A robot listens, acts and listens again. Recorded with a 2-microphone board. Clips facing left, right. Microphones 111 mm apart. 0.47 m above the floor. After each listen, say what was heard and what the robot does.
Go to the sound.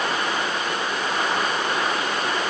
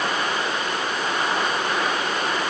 Keep listening.
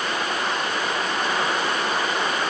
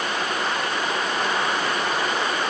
Keep listening.
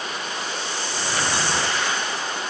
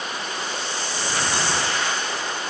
I can't make out anything to turn to.